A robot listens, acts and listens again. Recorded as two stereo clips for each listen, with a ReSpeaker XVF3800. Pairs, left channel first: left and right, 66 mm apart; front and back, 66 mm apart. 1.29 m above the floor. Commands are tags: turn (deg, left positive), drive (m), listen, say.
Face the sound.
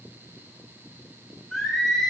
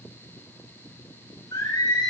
<say>Facing the singing, 2 to 4 m away.</say>